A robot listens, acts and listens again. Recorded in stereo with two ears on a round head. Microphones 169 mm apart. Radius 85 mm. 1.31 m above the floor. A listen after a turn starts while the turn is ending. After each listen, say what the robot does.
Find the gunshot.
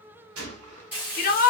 Turn 90° right.
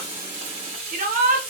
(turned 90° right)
I heard a gunshot from this way, but can't make it out now.